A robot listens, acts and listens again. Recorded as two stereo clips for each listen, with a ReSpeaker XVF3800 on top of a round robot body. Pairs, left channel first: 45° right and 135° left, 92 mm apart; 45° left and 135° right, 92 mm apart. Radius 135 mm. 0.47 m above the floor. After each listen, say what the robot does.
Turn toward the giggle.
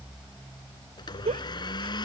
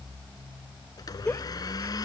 Turn 115° left.
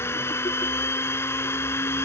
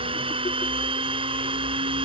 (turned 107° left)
Turn 10° left.
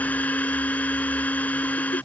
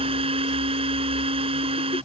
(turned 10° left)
Keep listening.
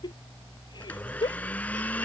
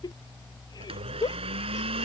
Found it: a giggle, straight ahead.